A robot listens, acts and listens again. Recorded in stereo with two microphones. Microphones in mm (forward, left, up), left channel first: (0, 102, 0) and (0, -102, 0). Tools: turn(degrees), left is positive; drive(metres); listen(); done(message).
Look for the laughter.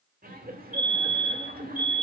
turn(degrees=-45)
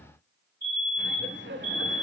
turn(degrees=-80)
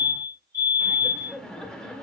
done("Facing the laughter.")